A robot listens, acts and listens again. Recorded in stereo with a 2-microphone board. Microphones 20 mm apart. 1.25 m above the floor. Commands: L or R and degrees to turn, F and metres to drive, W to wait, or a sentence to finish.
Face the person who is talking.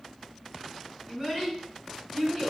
R40
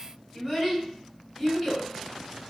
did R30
R10
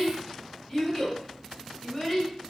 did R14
Facing the child speaking, 2 to 4 m away.